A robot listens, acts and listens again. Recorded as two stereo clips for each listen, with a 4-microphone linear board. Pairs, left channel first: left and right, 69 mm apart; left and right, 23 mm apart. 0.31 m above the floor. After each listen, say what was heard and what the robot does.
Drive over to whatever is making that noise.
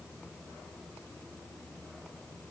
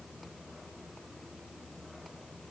Keep listening.
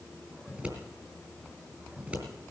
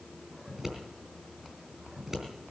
The scissors: about 20° right or 160° right. Turn 20° right.
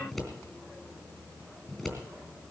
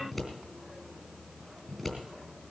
Drive 1.0 m forward.
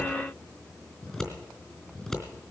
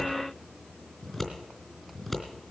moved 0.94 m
Drive 1.0 m forward.
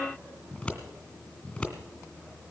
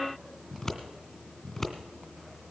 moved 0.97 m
The scissors is now 15° left. Turn 15° left.
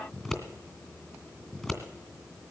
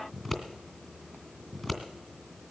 Drive 1.0 m forward.
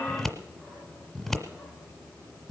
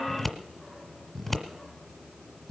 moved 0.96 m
Drive 1.0 m forward.
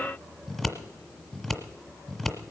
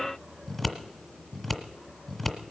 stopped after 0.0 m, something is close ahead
I am next to the scissors.